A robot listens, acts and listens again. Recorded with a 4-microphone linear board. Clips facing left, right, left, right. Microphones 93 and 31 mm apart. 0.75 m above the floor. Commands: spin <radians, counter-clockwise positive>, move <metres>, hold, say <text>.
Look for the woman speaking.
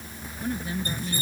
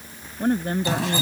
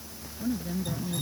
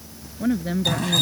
spin -0.87
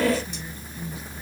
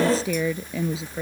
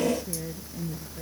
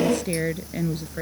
spin -1.48
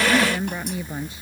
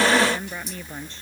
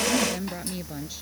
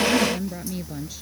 spin 0.17
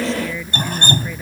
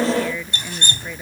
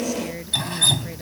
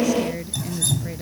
say Found it: a woman speaking, straight ahead.